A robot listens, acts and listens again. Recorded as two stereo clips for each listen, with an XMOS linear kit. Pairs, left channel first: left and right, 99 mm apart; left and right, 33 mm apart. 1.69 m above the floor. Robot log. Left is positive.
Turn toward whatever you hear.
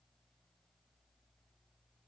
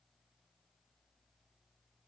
cmd idle
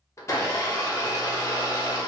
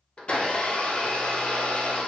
note: The blender: about 30° left or 150° left.
cmd yaw +30
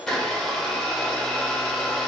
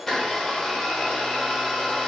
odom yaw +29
end: Found it: a blender, straight ahead, 1 to 2 m away.